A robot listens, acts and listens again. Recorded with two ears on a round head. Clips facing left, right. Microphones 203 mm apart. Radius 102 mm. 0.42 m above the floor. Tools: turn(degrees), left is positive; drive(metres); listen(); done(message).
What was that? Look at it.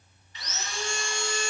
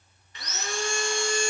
turn(degrees=-40)
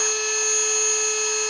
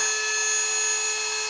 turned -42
done("Facing the sawing, 2 to 4 m away.")